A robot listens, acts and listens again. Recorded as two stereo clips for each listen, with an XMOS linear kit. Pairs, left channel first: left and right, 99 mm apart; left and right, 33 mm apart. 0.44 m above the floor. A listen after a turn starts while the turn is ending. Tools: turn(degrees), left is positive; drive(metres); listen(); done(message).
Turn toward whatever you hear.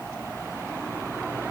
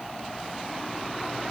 listen()
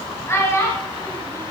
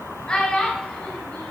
turn(degrees=30)
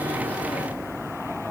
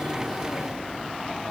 listen()
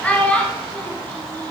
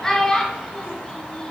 turn(degrees=15)
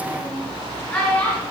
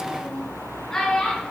turn(degrees=15)
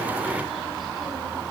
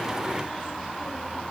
listen()
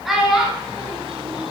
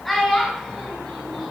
done("Found it: a child speaking, straight ahead.")